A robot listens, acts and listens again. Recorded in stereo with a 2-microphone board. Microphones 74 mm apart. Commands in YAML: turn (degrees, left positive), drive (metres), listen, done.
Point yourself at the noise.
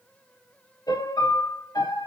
turn: 65
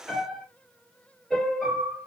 done: "Facing the piano."